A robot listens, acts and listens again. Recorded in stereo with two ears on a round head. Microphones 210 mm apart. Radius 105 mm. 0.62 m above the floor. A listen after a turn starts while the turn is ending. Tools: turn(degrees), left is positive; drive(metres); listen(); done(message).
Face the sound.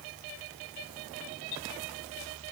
listen()
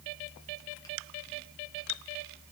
listen()
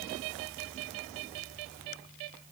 done("I can't make out anything to turn to.")